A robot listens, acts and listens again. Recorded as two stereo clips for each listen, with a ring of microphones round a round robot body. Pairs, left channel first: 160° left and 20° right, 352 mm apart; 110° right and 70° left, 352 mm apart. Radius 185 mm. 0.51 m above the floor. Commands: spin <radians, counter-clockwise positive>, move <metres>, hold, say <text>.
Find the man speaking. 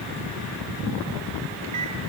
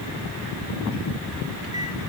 hold
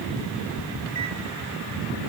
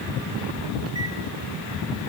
hold
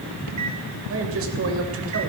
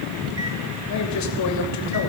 spin -1.31
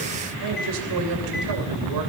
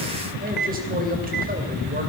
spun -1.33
say Found it: a man speaking, straight ahead.